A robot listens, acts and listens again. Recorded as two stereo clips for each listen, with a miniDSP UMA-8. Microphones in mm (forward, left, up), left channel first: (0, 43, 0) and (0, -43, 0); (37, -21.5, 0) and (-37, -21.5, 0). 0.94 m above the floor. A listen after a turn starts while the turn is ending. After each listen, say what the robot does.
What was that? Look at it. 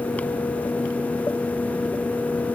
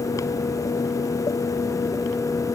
Keep listening.
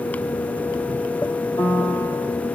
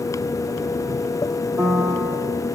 Turn 135° left.
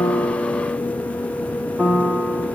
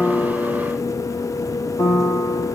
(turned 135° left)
Turn 20° right.
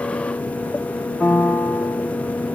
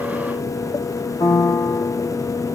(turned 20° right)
Found it: a piano, straight ahead, 2 to 4 m away.